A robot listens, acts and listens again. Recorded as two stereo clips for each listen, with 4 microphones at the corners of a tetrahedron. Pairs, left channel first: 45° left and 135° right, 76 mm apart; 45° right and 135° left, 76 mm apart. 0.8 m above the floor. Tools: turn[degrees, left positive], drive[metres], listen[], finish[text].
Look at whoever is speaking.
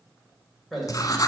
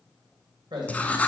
Thought: The man speaking: 135° left.
Action: turn[135]
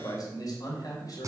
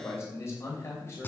Thought: The man speaking is now 10° left.
Action: turn[10]
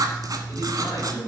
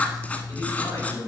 Action: finish[Found it: a man speaking, straight ahead.]